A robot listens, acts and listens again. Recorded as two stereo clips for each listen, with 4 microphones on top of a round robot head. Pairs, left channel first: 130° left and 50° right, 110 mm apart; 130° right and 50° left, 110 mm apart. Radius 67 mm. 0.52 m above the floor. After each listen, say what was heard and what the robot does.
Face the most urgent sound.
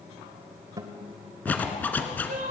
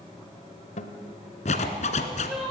The crying: 35° right. Turn 35° right.
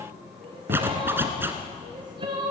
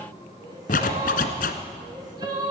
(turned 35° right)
Found it: crying, straight ahead, over 4 m away.